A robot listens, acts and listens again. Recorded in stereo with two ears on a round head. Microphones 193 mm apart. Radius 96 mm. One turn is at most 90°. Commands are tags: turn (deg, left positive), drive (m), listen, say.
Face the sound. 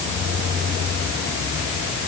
<listen/>
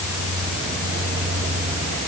<listen/>
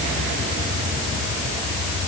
<say>I can't make out anything.</say>